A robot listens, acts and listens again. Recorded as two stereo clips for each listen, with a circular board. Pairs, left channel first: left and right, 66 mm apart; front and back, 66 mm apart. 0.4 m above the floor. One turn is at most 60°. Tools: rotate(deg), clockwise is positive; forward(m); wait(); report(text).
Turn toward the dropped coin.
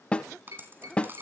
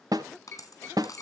rotate(35)
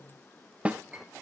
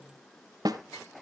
report("Facing where the dropped coin came from. I can't hear it now.")